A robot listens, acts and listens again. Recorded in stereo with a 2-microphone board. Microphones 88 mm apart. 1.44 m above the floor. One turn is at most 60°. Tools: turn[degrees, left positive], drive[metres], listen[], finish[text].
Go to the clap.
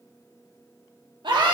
Action: listen[]
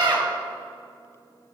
Action: listen[]
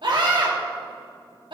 Action: finish[I can't make out a clap, only a scream.]